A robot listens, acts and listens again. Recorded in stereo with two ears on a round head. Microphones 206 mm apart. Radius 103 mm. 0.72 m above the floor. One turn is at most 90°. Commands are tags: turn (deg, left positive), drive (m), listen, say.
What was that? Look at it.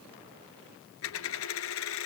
<turn deg="65"/>
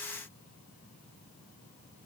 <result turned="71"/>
<listen/>
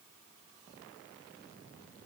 <say>I heard a dropped coin, but can't make it out now. It was about 5° right or 45° left.</say>